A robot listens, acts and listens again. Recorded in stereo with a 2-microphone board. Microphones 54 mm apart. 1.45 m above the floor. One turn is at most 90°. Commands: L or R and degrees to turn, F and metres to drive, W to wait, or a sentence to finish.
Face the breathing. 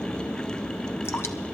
W
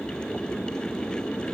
W
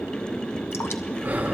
R40
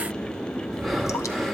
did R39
Found it: breathing, straight ahead.